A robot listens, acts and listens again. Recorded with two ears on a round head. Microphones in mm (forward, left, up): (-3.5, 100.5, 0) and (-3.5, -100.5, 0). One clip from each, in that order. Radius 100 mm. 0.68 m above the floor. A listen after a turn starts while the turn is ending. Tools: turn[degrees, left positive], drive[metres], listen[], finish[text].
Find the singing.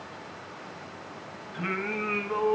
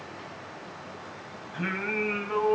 Thought: The singing: about 40° right or 140° right.
Action: turn[-40]
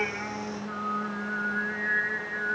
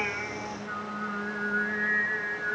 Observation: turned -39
Thought: So it is at 110° right.
Action: turn[-110]
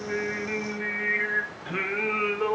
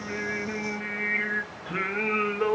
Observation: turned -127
Thought: The singing is now 10° left.
Action: turn[10]
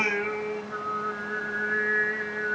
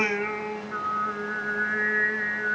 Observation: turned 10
Action: finish[Facing the singing.]